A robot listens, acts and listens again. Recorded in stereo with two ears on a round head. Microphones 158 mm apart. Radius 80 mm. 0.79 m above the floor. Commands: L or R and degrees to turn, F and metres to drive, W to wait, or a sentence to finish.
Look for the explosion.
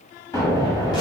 L20
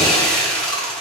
W
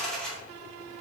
I heard an explosion, but can't make it out now. It was about straight ahead or 140° left.